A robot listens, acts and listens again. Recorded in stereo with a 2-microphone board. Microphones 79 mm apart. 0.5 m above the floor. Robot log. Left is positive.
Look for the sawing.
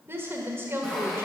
cmd yaw +30
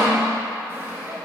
note: So it is at 30° right.
cmd yaw -30
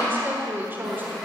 end: Found it: sawing, straight ahead.